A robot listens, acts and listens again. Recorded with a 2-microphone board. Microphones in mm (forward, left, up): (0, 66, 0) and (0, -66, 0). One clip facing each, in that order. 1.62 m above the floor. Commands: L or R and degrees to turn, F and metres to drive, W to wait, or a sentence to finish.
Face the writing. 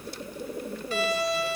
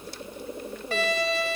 W
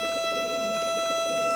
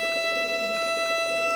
W
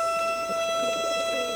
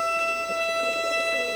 I can't make out writing to turn to.